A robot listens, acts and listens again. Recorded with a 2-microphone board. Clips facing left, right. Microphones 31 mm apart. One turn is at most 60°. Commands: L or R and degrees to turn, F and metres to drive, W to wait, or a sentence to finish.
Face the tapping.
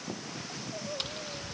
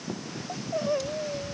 L50
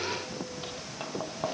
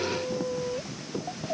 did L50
L60
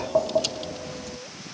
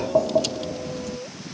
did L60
Facing the tapping.